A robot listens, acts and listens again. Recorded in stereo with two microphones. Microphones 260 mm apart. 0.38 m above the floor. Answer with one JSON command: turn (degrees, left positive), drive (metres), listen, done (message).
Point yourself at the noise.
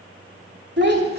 {"turn": -40}
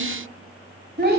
{"turn": -40}
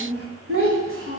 {"turn": -130}
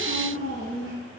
{"turn": -45}
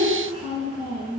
{"turn": -20}
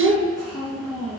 {"done": "Found it: a child speaking, straight ahead."}